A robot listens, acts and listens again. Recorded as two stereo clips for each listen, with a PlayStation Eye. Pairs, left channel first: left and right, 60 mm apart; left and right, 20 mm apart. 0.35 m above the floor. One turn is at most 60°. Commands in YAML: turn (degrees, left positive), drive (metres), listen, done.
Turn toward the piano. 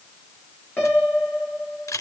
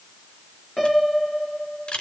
turn: 25
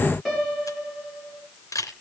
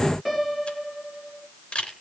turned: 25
done: "Found it: a piano, straight ahead, over 4 m away."